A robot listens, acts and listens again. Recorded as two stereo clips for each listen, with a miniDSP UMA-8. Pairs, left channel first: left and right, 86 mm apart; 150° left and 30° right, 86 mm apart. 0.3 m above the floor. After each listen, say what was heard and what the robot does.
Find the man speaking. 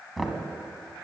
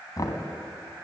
Keep listening.
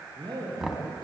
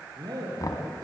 The man speaking: 65° right. Turn 65° right.
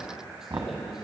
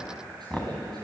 Keep listening.
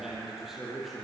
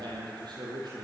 Facing the man speaking, over 4 m away.